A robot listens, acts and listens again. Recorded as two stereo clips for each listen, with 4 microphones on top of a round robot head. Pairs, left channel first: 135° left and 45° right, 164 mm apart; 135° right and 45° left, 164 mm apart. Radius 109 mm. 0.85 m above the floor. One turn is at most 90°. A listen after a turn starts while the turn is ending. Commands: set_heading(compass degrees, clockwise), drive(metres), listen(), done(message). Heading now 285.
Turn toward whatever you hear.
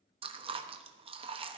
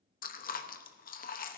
set_heading(15)
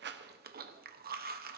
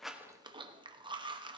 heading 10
set_heading(25)
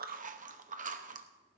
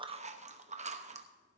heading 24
done("Facing the chewing, under 1 m away.")